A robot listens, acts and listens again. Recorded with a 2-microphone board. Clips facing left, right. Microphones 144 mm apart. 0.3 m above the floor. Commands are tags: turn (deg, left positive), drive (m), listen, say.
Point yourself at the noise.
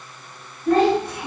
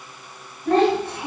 <turn deg="-30"/>
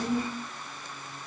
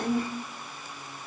<turn deg="-120"/>
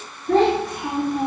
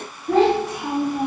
<say>Found it: a child speaking, straight ahead, 1 to 2 m away.</say>